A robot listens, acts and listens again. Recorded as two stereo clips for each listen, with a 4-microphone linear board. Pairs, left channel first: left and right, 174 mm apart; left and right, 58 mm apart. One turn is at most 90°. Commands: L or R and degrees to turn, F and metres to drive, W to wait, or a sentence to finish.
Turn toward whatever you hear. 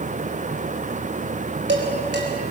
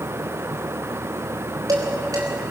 R90
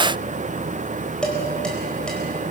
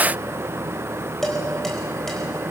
Facing the dishes clattering.